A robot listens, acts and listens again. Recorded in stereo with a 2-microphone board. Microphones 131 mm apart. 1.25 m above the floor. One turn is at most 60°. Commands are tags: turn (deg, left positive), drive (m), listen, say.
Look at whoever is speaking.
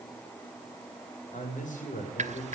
<turn deg="60"/>
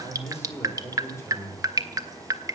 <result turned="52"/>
<turn deg="20"/>
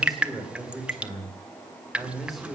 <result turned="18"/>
<say>Found it: a man speaking, straight ahead, over 4 m away.</say>